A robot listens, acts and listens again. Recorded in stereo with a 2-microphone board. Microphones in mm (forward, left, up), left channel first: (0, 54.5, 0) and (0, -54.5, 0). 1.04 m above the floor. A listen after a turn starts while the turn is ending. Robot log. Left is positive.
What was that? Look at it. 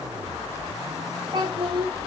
note: The child speaking: about 45° right or 135° right.
cmd yaw -45
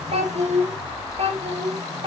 note: So it is at 55° right.
cmd yaw -55
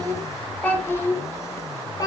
note: The child speaking is now 35° left.
cmd yaw +35
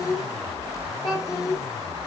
note: The child speaking is now 40° left.
cmd yaw +40
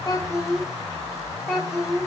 note: The child speaking is now 10° left.
cmd yaw +10
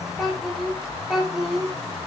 end: Found it: a child speaking, straight ahead, 2 to 4 m away.